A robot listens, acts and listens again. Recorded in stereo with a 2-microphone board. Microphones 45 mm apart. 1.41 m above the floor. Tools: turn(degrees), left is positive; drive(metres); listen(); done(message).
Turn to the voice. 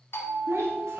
turn(degrees=-70)
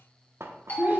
turn(degrees=-40)
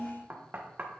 turn(degrees=20)
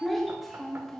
done("Found it: a child speaking, straight ahead, 1 to 2 m away.")